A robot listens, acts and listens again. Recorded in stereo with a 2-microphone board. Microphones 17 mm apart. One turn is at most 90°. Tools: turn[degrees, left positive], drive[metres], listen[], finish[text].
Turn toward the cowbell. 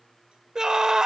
Action: listen[]
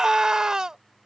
Action: listen[]
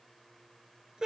Action: finish[I can't make out a cowbell to turn to.]